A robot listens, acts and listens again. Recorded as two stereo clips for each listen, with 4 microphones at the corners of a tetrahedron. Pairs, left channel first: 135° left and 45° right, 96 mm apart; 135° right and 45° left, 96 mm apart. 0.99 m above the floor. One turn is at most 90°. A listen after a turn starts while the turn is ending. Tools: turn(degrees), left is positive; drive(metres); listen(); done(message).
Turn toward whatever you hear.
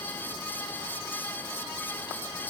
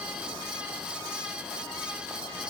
listen()
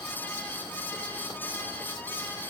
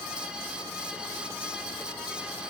listen()
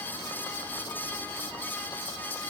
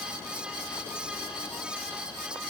done("I can't make out anything to turn to.")